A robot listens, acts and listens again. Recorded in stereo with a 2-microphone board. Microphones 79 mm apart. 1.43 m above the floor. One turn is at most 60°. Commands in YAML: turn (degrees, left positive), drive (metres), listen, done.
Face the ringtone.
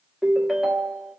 turn: 30
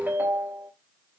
turn: -30
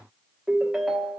turn: -10
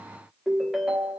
done: "Facing the ringtone."